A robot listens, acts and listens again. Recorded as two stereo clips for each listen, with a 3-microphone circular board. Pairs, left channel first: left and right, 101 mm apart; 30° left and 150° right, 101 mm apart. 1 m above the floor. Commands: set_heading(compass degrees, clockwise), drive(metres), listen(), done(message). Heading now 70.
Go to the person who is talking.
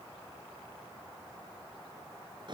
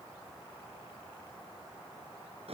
listen()
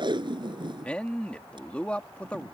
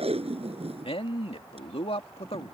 set_heading(60)
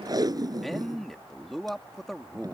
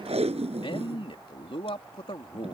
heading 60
drive(1.0)
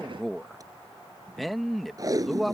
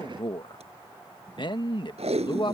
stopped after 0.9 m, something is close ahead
done("Arrived at the man speaking, straight ahead.")